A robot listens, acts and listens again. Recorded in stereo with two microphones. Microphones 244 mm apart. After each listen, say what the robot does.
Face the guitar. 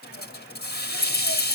Keep listening.
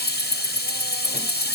Keep listening.
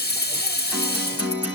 Turn 30° right.
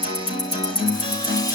Turn 20° left.
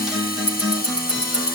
Facing the guitar, over 4 m away.